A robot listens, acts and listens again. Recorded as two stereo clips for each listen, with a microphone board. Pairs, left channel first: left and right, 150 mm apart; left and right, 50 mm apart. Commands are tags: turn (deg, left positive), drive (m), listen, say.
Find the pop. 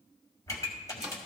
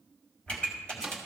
<turn deg="20"/>
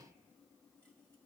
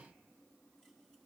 <listen/>
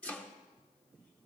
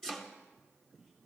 <say>I heard a pop, but can't make it out now. It was about straight ahead or 140° left.</say>